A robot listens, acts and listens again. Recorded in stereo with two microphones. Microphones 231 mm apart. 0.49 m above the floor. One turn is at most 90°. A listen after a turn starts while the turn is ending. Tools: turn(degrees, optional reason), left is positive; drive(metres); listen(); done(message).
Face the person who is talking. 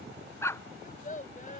turn(degrees=35, reason="The child speaking: about 35° left or 145° left.")
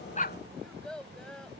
done("Facing the child speaking.")